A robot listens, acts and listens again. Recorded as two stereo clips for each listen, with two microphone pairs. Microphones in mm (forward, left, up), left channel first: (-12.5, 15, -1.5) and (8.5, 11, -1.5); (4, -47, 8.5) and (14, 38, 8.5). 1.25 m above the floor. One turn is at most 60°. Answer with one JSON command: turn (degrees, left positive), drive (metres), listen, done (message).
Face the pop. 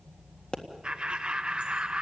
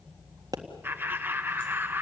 {"turn": 60}
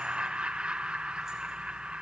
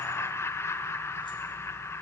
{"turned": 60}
{"turn": 60}
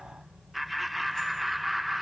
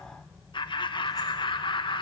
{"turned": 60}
{"done": "Facing where the pop came from. I can't hear it now."}